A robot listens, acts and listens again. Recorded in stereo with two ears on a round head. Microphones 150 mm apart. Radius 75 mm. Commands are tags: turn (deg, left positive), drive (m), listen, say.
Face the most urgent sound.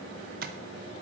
<listen/>
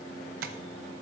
<listen/>
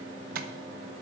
<say>I can't make out anything urgent.</say>